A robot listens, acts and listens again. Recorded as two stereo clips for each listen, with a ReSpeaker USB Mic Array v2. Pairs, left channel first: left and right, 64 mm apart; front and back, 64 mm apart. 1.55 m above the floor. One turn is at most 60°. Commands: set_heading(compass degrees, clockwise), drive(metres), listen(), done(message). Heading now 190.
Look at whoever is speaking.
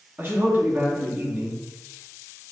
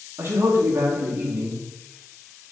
set_heading(250)
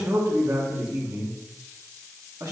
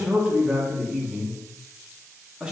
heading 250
set_heading(310)
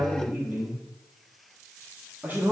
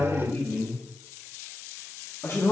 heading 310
set_heading(340)
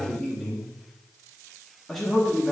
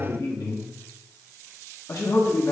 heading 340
done("Found it: a man speaking, straight ahead.")